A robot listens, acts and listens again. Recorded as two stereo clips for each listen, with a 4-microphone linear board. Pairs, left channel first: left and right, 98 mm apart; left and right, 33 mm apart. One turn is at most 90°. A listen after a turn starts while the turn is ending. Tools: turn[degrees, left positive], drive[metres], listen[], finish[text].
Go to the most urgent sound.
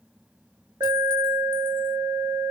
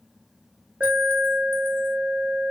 Thought: The alarm: about 40° right or 140° right.
Action: turn[-40]
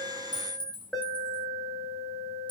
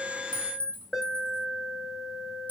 Action: drive[1.0]
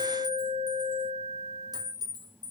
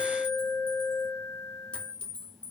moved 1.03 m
Action: drive[1.0]
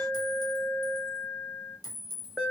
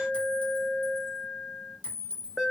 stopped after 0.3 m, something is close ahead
Thought: The alarm is now 10° right.
Action: turn[-10]
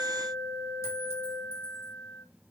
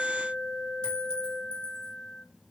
Action: finish[I am next to the alarm.]